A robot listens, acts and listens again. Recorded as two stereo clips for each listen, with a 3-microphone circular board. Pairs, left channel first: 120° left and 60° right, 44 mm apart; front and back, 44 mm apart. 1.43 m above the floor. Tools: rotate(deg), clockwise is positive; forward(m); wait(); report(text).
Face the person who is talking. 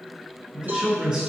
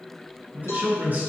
rotate(130)
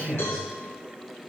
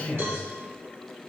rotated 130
rotate(-25)
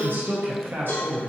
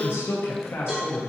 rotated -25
rotate(25)
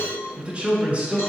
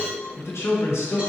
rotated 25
report("Found it: a man speaking, straight ahead, under 1 m away.")